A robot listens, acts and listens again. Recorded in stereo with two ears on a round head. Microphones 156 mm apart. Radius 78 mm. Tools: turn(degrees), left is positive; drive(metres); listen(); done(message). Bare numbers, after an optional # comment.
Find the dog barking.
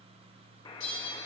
listen()
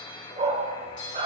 # The dog barking: about 45° right or 135° right.
turn(-45)
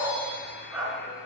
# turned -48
# So it is at 10° right.
turn(-10)
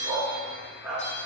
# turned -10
# The dog barking is now 10° right.
turn(-10)
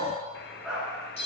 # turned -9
done("Found it: a dog barking, straight ahead, over 4 m away.")